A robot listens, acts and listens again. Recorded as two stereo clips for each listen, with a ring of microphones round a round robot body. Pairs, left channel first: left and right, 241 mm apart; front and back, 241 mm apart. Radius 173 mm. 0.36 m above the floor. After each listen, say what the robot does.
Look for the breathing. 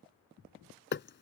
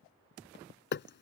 Keep listening.
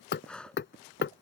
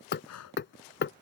Found it: breathing, straight ahead.